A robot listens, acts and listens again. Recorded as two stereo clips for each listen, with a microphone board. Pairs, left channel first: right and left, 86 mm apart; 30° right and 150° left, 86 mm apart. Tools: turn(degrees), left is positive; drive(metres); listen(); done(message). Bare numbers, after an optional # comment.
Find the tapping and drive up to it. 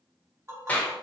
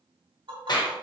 # The tapping: 145° left.
turn(145)
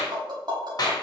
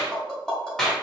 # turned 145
# The tapping is now 55° left.
turn(55)
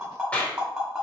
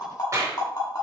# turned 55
drive(1.0)
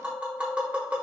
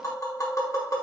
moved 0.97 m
# The tapping is now 15° left.
turn(15)
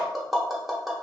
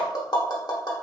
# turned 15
drive(1.0)
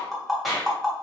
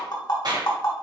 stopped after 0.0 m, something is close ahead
done("Arrived at the tapping, straight ahead.")